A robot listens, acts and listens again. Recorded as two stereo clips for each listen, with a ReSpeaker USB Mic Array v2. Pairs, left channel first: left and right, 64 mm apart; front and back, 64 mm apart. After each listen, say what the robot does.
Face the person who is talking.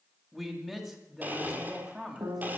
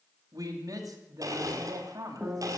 Turn 175° left.
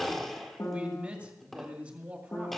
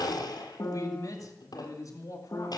Turn 25° right.
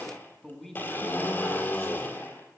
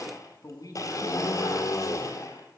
Facing the man speaking, 2 to 4 m away.